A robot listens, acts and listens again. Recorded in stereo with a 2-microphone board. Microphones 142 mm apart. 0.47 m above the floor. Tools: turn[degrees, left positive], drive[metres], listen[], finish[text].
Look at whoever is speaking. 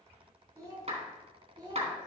Thought: The child speaking: about 30° right or 150° right.
Action: turn[-30]
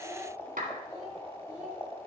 Action: finish[Found it: a child speaking, straight ahead.]